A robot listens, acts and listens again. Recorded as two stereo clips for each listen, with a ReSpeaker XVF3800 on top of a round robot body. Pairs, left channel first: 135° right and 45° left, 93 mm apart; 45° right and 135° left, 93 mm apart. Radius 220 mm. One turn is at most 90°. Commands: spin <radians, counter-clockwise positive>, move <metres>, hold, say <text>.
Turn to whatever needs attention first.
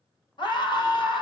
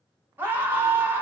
spin -1.57
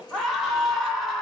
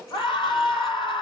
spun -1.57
spin -0.87
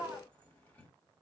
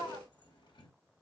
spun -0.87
spin -0.17
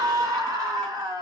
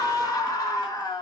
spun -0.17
say Facing the scream, 1 to 2 m away.